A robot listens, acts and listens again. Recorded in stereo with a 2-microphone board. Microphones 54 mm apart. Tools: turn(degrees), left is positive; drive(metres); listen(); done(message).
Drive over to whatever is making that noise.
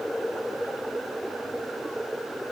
listen()
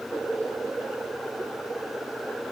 listen()
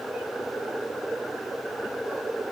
done("I can't make out anything to turn to.")